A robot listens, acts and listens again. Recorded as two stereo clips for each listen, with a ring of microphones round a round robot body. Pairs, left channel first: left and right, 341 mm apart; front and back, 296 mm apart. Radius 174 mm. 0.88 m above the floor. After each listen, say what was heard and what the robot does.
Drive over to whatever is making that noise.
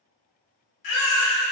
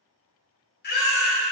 The baby crying: 60° left. Turn 60° left.
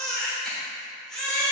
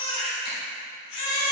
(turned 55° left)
Drive 1.0 m forward.
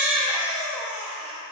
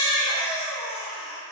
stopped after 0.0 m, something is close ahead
Something is in my way. I am facing the baby crying but have not reached it.